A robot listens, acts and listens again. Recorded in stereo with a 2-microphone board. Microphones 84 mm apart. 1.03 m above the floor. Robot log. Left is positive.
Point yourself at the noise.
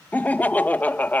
note: The laughter: about 20° left or 160° left.
cmd yaw +20
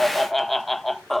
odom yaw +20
end: Found it: laughter, straight ahead.